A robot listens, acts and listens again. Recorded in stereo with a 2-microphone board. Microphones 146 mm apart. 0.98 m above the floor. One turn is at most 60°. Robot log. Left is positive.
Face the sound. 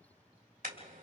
note: The car horn: about 75° right or 105° right.
cmd yaw -60
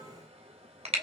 note: So it is at 45° right.
cmd yaw -45
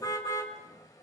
note: The car horn is now 25° left.
cmd yaw +25
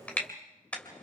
note: The car horn is now 10° left.
cmd yaw +10
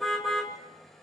end: Facing the car horn.